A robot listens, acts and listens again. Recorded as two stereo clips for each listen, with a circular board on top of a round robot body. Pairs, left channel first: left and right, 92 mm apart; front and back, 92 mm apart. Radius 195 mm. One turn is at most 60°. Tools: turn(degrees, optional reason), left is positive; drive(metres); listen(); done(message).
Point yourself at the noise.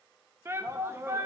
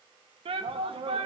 turn(degrees=-60, reason="The shout: 155° right.")
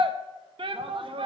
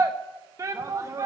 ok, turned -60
turn(degrees=-60, reason="The shout is now 120° right.")
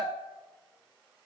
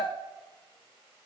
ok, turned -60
turn(degrees=-50, reason="The shout is now 50° right.")
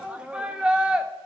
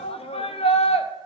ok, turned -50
turn(degrees=-10, reason="The shout is now 10° right.")
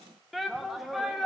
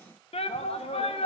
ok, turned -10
done("Found it: a shout, straight ahead, under 1 m away.")